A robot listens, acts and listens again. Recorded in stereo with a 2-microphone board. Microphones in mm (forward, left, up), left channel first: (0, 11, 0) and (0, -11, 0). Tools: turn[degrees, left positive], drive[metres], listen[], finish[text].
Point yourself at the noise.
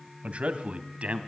Thought: The man speaking: about 70° right or 110° right.
Action: turn[-70]
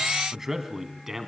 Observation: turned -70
Thought: So it is at 15° right.
Action: turn[-15]
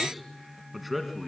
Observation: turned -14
Action: finish[Found it: a man speaking, straight ahead.]